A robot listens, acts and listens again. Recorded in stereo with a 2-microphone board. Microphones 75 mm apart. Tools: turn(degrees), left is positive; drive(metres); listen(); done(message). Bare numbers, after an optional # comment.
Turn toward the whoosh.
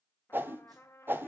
# The whoosh: about 30° right or 150° right.
turn(-30)
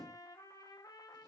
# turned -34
listen()
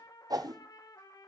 # So it is at 120° right.
turn(-120)
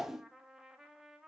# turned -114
done("Facing the whoosh, under 1 m away.")